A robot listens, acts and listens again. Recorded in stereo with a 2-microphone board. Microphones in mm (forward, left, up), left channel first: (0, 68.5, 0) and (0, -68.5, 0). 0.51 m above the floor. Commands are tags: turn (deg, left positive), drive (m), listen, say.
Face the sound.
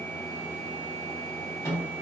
<turn deg="20"/>
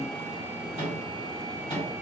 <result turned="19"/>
<turn deg="140"/>
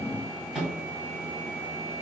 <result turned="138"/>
<say>Found it: a microwave, straight ahead, 1 to 2 m away.</say>